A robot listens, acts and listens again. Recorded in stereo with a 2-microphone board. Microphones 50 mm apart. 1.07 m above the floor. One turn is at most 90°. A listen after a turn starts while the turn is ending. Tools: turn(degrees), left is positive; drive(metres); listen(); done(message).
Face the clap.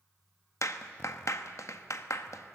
turn(degrees=90)
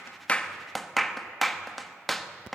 done("Found it: a clap, straight ahead, 1 to 2 m away.")